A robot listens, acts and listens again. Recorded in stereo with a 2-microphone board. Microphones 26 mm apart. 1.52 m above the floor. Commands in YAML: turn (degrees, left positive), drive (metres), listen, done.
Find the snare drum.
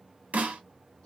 turn: -70
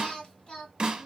turn: -40
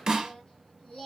turn: -25
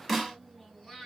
done: "Found it: a snare drum, straight ahead, 1 to 2 m away."